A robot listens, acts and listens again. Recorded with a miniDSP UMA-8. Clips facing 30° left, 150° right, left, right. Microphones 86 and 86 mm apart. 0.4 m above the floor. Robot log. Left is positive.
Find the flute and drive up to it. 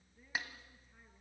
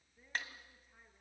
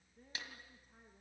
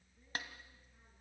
cmd idle
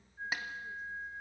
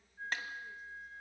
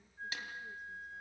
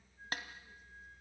note: The flute: 95° left.
cmd yaw +95
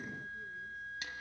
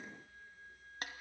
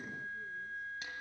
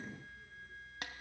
note: The flute is now 35° left.
cmd yaw +35
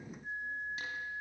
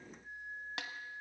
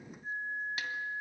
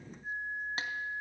cmd fwd 1.0
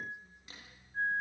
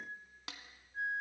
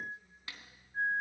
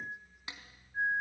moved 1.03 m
cmd fwd 1.0
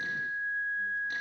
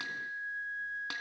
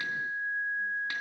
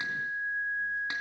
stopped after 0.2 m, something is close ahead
end: I am next to the flute.